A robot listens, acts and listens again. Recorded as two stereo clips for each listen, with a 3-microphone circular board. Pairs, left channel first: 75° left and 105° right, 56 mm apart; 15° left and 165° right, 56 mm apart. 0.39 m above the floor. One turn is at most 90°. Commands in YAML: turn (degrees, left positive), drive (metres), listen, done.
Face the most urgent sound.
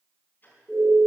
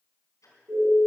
turn: 90
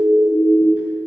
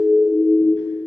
turn: 90
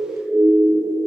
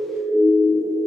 turn: 25
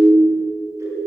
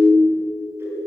turn: 10
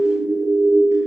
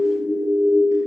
done: "Found it: a siren, straight ahead, over 4 m away."